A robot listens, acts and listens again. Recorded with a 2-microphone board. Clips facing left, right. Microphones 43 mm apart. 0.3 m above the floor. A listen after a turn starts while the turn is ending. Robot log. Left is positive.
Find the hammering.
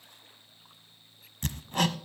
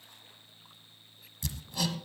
note: The hammering: about 50° left or 130° left.
cmd yaw +50
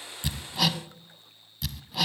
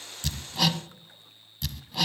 end: Facing the hammering.